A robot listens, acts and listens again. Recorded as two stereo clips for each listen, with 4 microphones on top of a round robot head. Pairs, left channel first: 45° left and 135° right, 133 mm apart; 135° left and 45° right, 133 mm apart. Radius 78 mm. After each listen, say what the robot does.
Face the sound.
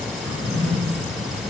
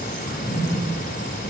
Turn 110° left.
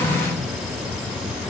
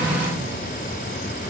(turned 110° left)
Found it: a drawer, straight ahead.